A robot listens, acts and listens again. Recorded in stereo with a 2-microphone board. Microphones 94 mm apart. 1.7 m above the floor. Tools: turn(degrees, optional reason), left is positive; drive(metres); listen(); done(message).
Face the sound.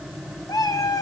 turn(degrees=40, reason="The cat meowing: about 40° left or 140° left.")
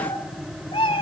turn(degrees=100, reason="So it is at 100° left.")
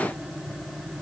listen()
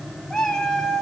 turn(degrees=10, reason="The cat meowing is now 10° left.")
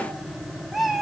done("Found it: a cat meowing, straight ahead.")